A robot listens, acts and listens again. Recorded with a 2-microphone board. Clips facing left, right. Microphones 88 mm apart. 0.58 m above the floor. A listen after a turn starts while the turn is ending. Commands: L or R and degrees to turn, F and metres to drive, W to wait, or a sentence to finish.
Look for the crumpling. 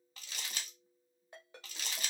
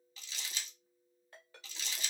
L55
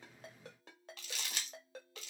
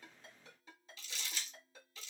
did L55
L70
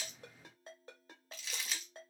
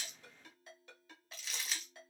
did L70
Facing the crumpling.